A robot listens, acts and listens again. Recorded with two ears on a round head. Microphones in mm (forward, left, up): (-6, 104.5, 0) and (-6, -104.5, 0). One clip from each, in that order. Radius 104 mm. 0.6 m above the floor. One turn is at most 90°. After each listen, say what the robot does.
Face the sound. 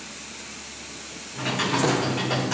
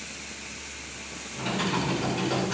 Turn 20° left.
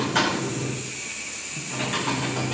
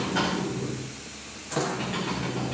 Turn 90° left.
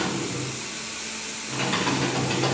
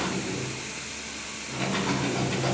Turn 65° left.
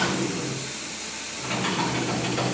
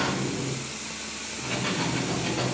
Turn 15° left.
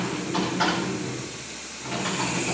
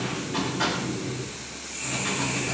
Found it: typing on a keyboard, straight ahead.